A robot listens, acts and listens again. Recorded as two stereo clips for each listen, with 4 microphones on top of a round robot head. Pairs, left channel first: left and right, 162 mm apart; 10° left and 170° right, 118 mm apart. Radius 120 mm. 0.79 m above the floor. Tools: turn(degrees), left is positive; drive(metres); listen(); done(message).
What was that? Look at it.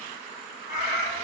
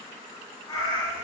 turn(degrees=55)
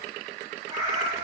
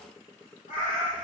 turn(degrees=-30)
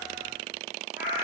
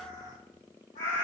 turn(degrees=-15)
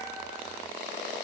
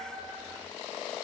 turn(degrees=-10)
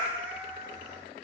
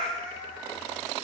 turn(degrees=-15)
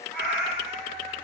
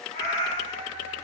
done("Facing the cat meowing, 1 to 2 m away.")